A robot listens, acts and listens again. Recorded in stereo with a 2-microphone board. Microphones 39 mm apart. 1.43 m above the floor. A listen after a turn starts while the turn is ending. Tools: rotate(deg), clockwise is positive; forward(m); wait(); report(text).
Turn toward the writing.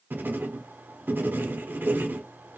rotate(60)
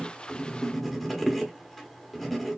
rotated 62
report("Found it: writing, straight ahead, 1 to 2 m away.")